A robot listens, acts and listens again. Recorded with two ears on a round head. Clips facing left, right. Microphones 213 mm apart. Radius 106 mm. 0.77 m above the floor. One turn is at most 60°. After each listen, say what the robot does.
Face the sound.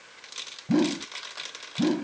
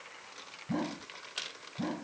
Turn 60° left.
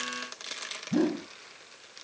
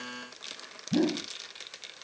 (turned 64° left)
Facing the whoosh.